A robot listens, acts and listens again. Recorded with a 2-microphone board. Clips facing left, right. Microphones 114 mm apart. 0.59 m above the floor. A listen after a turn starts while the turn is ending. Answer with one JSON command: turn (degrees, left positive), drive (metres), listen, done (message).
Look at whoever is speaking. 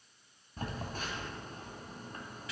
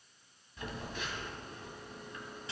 {"listen": true}
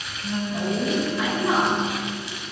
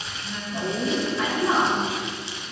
{"turn": 30}
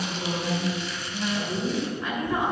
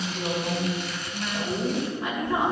{"turn": -20}
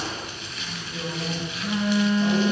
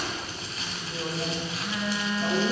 {"done": "Found it: a woman speaking, straight ahead, 2 to 4 m away."}